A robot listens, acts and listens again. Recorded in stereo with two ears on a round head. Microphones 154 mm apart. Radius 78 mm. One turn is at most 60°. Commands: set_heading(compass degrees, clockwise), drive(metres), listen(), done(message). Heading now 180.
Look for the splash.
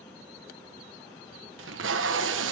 listen()
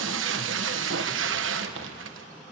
listen()
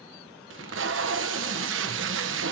done("I can't make out a splash to turn to.")